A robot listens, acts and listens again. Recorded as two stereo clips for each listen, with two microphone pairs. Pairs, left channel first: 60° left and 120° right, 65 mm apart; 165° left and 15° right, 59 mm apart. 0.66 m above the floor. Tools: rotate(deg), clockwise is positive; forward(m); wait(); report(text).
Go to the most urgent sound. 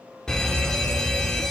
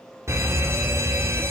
rotate(20)
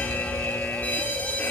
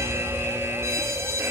forward(1.0)
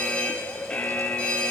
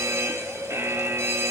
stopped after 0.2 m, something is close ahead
rotate(10)
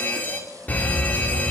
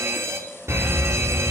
report("Blocked. The fire alarm is further on, straight ahead.")